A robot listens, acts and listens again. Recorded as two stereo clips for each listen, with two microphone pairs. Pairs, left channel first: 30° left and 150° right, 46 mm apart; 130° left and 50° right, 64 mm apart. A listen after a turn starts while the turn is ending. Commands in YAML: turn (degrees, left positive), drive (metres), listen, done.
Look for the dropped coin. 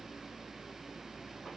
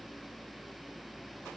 listen: true
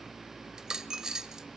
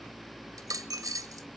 turn: -75
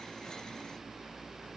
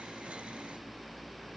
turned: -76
done: "I heard a dropped coin from this way, but can't make it out now."